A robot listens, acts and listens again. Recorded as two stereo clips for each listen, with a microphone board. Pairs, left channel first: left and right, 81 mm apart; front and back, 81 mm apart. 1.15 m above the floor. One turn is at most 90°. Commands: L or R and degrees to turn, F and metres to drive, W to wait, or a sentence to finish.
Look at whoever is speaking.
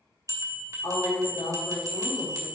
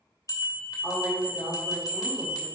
L90
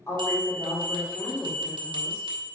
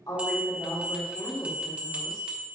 L35
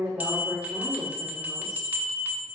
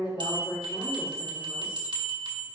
R20
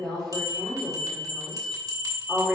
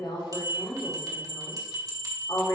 Found it: a woman speaking, straight ahead, 2 to 4 m away.